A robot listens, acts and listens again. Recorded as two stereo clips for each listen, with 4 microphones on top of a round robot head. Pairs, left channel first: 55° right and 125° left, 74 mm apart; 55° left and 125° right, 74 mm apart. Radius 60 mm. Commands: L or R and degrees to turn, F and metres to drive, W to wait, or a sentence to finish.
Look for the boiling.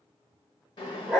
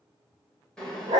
R25
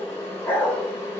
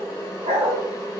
Facing the boiling.